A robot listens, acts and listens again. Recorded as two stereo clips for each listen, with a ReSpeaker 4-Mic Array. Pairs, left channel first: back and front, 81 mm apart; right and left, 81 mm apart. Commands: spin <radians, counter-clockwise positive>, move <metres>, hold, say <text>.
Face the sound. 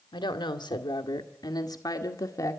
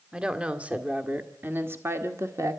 spin 2.36
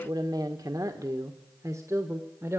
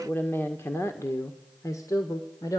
spin -0.87
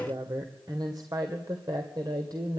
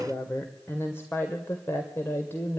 spin -0.52
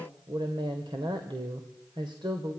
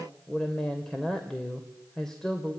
spin -0.17
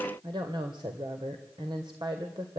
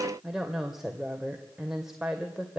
say Found it: a woman speaking, straight ahead.